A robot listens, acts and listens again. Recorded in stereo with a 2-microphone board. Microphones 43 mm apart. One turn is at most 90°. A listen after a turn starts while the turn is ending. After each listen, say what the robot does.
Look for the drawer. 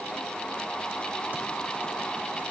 Keep listening.
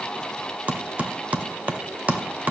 Keep listening.
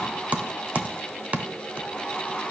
I can't make out a drawer, only typing on a keyboard.